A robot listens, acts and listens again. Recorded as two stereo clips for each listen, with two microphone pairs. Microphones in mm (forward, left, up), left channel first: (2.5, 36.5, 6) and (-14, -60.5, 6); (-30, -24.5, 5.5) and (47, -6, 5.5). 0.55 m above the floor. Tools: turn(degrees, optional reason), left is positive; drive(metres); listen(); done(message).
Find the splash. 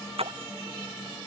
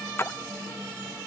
turn(degrees=-105, reason="The splash: 105° right.")
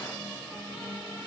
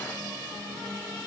done("Facing where the splash came from. I can't hear it now.")